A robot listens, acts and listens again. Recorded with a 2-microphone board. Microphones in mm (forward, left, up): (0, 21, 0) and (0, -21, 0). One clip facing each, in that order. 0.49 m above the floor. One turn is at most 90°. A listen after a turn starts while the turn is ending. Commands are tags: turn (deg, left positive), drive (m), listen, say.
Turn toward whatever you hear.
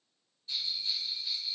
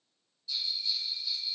<turn deg="35"/>
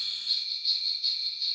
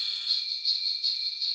<say>Facing the bell.</say>